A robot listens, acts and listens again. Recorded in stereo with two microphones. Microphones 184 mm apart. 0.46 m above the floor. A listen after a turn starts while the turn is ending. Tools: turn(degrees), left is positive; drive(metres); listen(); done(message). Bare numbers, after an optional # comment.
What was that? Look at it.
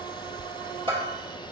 # The bell: about 30° right or 150° right.
turn(-30)
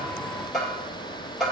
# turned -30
done("Found it: a bell, straight ahead, 2 to 4 m away.")